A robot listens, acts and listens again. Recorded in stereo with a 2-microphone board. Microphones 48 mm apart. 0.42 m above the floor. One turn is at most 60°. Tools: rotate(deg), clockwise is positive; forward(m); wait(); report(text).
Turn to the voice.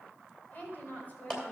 rotate(-40)
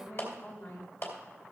rotate(-60)
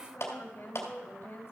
rotate(-45)
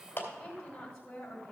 rotate(-10)
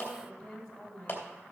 report("Found it: a woman speaking, straight ahead.")